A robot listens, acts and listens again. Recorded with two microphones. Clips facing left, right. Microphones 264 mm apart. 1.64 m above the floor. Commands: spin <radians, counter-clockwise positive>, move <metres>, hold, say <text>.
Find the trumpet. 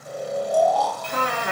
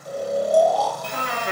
spin 1.13
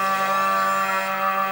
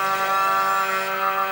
spin 0.87
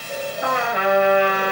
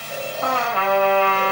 spin 0.26
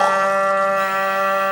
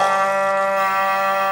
say Found it: a trumpet, straight ahead, 1 to 2 m away.